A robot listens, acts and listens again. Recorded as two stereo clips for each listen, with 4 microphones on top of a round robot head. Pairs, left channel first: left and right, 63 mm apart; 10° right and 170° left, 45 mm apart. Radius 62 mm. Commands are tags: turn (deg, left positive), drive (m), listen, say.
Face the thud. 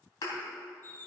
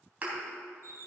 <turn deg="115"/>
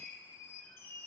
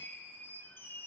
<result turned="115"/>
<say>Facing where the thud came from. I can't hear it now.</say>